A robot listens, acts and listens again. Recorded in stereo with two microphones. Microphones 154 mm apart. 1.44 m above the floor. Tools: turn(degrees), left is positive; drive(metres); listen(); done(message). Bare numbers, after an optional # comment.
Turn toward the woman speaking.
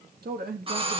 turn(-90)
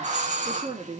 # So it is at 40° right.
turn(-40)
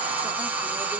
listen()
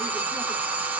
listen()
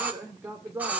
# The woman speaking is now 15° right.
turn(-15)
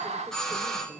listen()
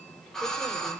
listen()
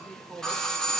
done("Found it: a woman speaking, straight ahead, over 4 m away.")